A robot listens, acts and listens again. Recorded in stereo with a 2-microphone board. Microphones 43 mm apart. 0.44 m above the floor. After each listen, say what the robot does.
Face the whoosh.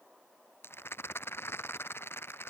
Keep listening.
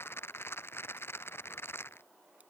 Keep listening.
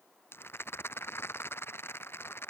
I can't make out a whoosh, only a rattle.